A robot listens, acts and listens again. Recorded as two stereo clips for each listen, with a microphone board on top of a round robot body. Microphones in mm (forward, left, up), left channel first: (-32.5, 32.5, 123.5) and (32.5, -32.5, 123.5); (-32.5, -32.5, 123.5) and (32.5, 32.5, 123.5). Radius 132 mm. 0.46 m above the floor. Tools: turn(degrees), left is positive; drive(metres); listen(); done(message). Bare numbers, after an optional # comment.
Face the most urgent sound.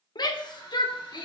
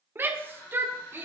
# The shout: 110° left.
turn(110)
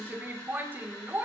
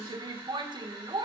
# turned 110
# The shout is now 20° left.
turn(20)
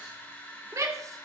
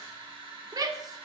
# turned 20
done("Facing the shout.")